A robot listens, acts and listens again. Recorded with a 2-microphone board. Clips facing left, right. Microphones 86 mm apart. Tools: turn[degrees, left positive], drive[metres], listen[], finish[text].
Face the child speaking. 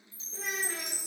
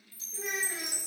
Thought: The child speaking: about 70° left or 110° left.
Action: turn[70]
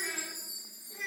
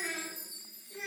Thought: So it is at 30° left.
Action: turn[30]
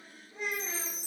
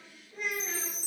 Thought: The child speaking is now 25° left.
Action: turn[25]
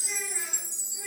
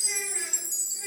Action: listen[]
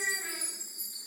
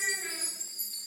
Action: listen[]
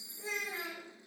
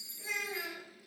Thought: The child speaking is now 35° left.
Action: turn[35]
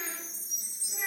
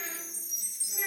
Action: listen[]
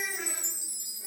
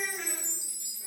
Thought: The child speaking is now 20° left.
Action: turn[20]
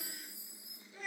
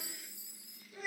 Action: finish[Facing the child speaking, 2 to 4 m away.]